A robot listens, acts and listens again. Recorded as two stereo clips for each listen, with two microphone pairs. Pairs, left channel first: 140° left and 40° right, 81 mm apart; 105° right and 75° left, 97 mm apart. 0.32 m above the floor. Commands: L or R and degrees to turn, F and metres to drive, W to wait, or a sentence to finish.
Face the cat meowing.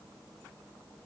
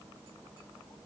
W
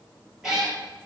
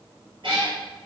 L45
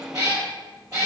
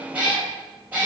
Found it: a cat meowing, straight ahead.